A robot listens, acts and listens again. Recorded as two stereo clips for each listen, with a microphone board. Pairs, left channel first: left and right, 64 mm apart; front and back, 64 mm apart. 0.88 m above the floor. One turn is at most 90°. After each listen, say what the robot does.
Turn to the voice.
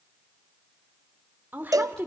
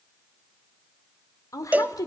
Turn 30° right.
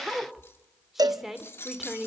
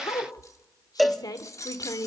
Facing the woman speaking.